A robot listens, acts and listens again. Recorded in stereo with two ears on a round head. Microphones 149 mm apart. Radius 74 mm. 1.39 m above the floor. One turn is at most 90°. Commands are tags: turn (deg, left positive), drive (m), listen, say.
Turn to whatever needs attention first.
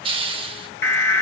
<turn deg="30"/>
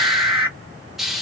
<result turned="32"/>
<turn deg="-15"/>
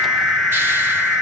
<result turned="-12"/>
<say>Found it: an alarm, straight ahead, under 1 m away.</say>